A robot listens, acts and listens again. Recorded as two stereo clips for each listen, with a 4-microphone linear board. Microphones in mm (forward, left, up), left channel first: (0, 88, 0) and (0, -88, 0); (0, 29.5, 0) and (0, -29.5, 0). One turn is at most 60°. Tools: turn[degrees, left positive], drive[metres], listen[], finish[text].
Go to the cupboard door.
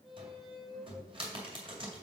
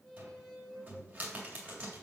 Thought: The cupboard door: about 30° right or 150° right.
Action: turn[-30]
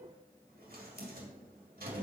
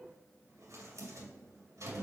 Thought: So it is at 115° right.
Action: turn[-60]
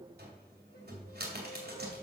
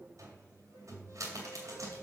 Thought: The cupboard door is now 75° right.
Action: turn[-60]
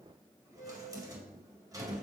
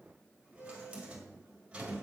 Thought: The cupboard door is now 20° right.
Action: turn[-20]
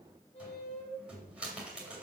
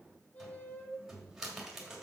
Action: drive[1.0]
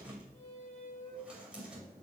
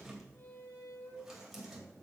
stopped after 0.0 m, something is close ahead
Action: finish[Something is in my way. I am facing the cupboard door but have not reached it.]